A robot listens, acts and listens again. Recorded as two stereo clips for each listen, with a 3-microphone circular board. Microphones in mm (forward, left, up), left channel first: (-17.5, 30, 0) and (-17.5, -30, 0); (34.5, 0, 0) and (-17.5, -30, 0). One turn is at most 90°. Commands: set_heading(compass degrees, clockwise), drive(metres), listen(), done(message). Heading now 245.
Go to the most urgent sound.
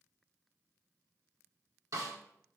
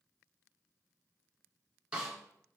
listen()
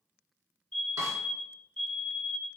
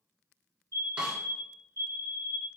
set_heading(215)
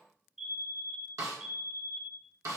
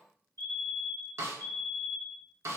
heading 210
drive(1.0)
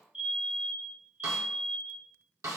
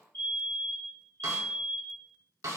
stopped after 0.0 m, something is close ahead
set_heading(220)
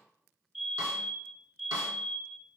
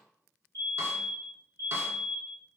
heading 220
done("Blocked. The fire alarm is further on, straight ahead.")